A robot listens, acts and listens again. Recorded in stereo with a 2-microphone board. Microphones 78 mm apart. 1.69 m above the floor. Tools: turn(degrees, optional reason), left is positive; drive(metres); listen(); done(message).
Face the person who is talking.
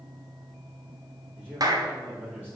turn(degrees=-20, reason="The man speaking: about 20° right or 160° right.")
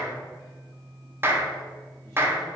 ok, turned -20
listen()
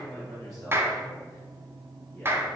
done("Found it: a man speaking, straight ahead, 2 to 4 m away.")